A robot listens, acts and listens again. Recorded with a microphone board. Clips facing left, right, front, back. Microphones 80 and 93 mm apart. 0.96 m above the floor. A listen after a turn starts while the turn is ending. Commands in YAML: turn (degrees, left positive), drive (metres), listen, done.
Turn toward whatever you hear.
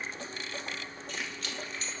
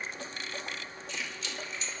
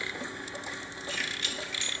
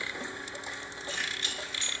turn: 125
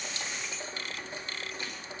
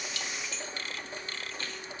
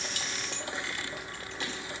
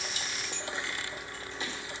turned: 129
turn: 10
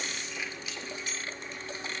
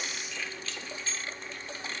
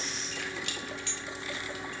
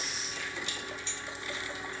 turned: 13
turn: 20
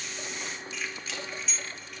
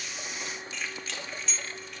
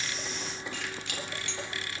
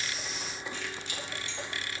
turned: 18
done: "Found it: keys jangling, straight ahead, 2 to 4 m away."